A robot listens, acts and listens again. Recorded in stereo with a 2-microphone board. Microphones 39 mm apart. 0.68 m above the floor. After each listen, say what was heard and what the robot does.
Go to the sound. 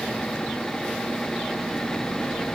Keep listening.
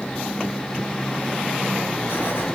The writing: about 65° left or 115° left. Turn 65° left.
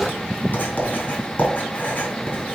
So it is at 50° left. Turn 50° left.
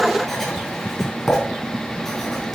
Drive 1.0 m forward.
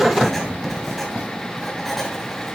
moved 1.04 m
Drive 1.0 m forward.
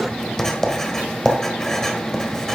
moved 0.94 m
The writing is now 15° left. Turn 15° left.
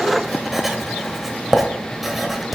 Drive 1.0 m forward.
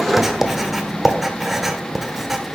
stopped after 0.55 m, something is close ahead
I am next to the writing.